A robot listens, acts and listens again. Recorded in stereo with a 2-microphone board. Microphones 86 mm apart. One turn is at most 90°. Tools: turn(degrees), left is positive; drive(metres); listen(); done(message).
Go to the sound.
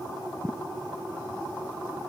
listen()
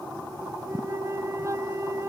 turn(degrees=-35)
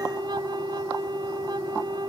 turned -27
turn(degrees=-90)
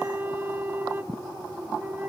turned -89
turn(degrees=-25)
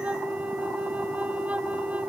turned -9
turn(degrees=-20)
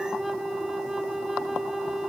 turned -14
drive(metres=1.0)
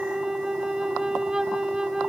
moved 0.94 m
turn(degrees=-10)
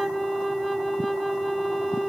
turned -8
drive(metres=1.0)
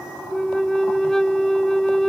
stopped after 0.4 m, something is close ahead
done("Arrived at the flute, straight ahead.")